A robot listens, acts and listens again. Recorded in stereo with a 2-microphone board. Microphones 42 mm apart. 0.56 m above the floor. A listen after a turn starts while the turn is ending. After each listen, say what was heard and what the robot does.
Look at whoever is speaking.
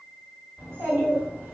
The child speaking: about 55° right or 125° right. Turn 55° right.
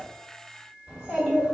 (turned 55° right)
So it is at 10° right. Turn 10° right.
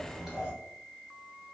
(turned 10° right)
Facing the child speaking.